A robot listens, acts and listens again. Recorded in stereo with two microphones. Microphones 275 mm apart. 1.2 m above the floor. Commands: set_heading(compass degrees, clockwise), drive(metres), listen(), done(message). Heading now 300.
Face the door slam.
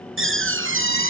set_heading(345)
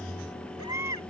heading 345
listen()
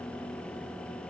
done("I heard a door slam, but can't make it out now. It was about straight ahead or 90° right.")